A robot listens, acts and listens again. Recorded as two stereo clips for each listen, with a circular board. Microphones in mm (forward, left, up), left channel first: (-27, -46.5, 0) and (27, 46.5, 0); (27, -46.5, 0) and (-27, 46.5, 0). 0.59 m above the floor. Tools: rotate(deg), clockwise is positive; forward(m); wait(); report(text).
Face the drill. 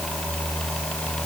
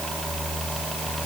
wait()
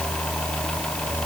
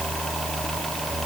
wait()
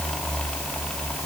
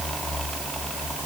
report("I can't make out a drill.")